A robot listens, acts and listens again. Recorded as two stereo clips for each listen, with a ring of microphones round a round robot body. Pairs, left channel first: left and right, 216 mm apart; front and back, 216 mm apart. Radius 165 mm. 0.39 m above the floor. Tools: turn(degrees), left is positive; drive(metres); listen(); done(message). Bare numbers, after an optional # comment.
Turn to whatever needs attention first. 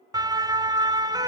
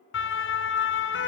# The siren: 20° right.
turn(-20)
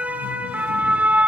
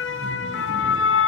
done("Found it: a siren, straight ahead.")